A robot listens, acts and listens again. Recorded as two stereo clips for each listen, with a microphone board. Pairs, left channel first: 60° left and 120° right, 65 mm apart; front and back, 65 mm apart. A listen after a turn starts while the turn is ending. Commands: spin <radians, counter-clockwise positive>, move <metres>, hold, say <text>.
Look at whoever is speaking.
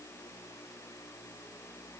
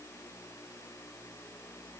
hold
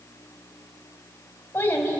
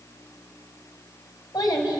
say Facing the child speaking.